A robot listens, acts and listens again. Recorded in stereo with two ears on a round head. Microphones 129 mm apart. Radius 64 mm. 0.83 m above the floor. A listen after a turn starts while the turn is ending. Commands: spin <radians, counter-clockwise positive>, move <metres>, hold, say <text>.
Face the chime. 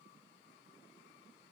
hold
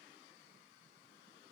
hold
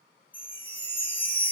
spin 0.52
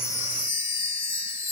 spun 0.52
spin 2.44
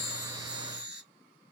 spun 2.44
spin -0.17
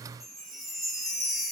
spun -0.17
say Found it: a chime, straight ahead.